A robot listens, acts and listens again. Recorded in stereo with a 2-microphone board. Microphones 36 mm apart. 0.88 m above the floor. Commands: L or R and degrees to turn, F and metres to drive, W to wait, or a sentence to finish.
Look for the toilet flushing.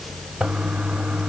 R30
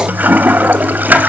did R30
R115
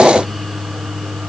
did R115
R30
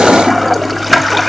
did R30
Found it: a toilet flushing, straight ahead.